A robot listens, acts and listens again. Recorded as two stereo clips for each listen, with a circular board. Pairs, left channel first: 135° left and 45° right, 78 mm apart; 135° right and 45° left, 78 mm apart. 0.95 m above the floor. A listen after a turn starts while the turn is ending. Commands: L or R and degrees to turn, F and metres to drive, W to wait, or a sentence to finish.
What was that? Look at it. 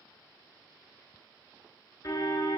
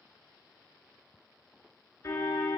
L175
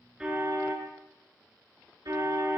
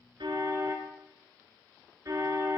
Found it: a car horn, straight ahead, over 4 m away.